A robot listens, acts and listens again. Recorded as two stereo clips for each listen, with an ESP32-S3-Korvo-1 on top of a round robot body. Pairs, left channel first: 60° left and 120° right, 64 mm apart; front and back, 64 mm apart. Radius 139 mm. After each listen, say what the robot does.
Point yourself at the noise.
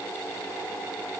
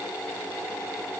Keep listening.
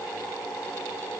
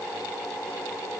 Keep listening.
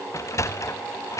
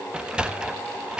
Turn 105° left.
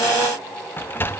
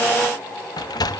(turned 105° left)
Found it: a sliding door, straight ahead.